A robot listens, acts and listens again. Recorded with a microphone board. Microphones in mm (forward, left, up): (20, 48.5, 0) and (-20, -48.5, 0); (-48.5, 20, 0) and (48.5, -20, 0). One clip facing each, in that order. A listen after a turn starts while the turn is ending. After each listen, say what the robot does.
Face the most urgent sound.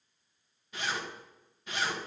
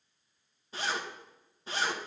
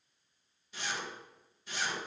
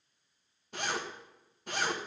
Keep listening.
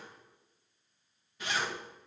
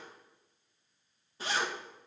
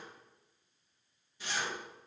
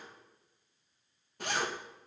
Keep listening.
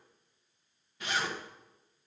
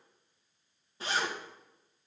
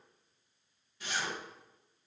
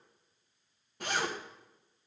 I can't make out anything urgent, only a zipper.